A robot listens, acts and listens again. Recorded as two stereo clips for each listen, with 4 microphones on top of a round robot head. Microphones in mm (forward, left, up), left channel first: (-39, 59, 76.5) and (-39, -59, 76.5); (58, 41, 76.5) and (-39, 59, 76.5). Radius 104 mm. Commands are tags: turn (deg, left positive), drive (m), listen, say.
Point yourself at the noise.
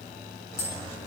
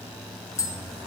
<turn deg="50"/>
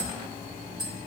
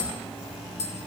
<say>Facing the tapping.</say>